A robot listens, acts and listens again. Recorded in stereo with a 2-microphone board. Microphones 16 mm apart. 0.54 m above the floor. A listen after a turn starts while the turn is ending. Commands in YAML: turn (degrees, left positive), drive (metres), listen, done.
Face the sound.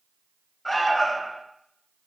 turn: 30
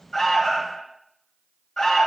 turn: 140
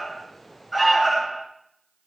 turn: 20
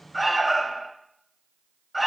turn: 10
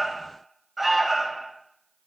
done: "Found it: an alarm, straight ahead."